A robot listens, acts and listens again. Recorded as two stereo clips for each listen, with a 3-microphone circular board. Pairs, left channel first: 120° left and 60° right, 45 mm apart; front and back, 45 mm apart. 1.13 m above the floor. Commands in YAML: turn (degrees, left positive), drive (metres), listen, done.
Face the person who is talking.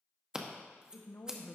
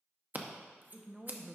turn: 105
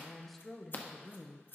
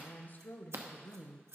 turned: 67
turn: 35
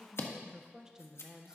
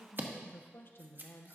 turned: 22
turn: 15
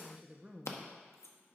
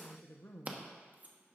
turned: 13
done: "Facing the woman speaking, under 1 m away."